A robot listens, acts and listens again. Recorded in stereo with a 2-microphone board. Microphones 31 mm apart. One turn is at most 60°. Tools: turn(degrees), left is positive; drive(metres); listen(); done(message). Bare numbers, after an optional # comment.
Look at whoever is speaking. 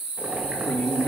# The man speaking: about 65° left or 115° left.
turn(60)
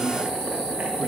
# So it is at 55° left.
turn(55)
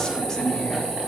# The man speaking is now 15° left.
turn(15)
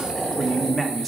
done("Found it: a man speaking, straight ahead, 1 to 2 m away.")